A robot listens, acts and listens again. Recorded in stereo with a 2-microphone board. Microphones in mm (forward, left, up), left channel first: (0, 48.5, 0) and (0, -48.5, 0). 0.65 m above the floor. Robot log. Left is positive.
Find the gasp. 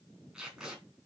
cmd idle
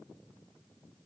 cmd idle
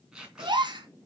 note: The gasp: about 50° right or 130° right.
cmd yaw -50
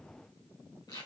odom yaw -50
cmd idle
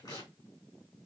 end: I heard a gasp, but can't make it out now. It was about straight ahead or 80° right.